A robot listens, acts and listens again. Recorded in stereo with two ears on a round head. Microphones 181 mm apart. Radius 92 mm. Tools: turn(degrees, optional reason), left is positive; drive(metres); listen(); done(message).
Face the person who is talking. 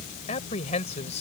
turn(degrees=40, reason="The man speaking: about 40° left or 140° left.")
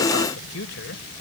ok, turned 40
turn(degrees=100, reason="So it is at 100° left.")
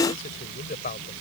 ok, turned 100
turn(degrees=45, reason="The man speaking is now 45° left.")
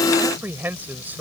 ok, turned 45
turn(degrees=-10, reason="The man speaking is now 10° right.")
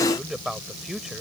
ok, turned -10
done("Found it: a man speaking, straight ahead.")